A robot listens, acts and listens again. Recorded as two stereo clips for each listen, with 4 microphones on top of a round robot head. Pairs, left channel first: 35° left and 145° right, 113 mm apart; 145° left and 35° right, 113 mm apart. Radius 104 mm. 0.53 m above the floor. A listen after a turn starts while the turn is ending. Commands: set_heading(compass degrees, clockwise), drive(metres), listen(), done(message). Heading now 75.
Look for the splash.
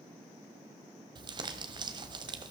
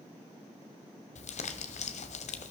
listen()
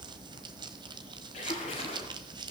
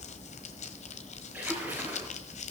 set_heading(35)
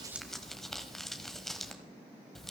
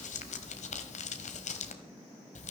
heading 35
done("Facing where the splash came from. I can't hear it now.")